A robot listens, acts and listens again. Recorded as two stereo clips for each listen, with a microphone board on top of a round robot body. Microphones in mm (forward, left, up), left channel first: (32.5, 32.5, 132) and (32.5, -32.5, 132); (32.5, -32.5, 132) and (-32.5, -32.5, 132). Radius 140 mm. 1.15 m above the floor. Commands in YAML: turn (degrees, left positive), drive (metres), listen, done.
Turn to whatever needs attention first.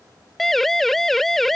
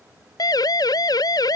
done: "Found it: a siren, straight ahead."